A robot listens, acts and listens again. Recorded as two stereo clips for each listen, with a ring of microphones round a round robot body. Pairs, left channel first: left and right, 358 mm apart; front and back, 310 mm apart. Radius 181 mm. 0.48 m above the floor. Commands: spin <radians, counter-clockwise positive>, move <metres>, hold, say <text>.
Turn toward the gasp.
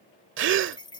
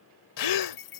spin -0.52
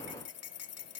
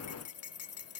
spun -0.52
say I heard a gasp from this way, but can't make it out now.